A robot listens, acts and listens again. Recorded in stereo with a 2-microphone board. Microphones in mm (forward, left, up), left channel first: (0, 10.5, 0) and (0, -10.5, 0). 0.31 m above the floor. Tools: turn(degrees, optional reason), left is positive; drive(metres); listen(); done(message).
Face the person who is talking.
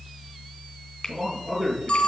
turn(degrees=-20, reason="The man speaking: about 20° right or 160° right.")
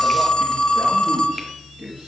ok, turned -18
turn(degrees=-140, reason="So it is at 140° right.")
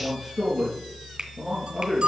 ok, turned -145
done("Facing the man speaking.")